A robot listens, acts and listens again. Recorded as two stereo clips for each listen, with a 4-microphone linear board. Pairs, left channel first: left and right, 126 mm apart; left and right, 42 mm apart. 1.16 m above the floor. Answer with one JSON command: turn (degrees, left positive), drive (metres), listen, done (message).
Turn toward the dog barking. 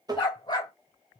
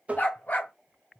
{"turn": 35}
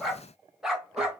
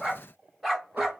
{"turn": -10}
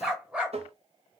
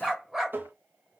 {"turn": -10}
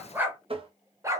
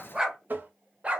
{"turn": -25}
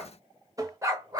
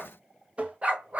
{"turn": -30}
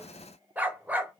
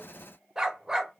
{"turn": -15}
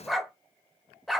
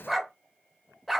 {"done": "Facing the dog barking."}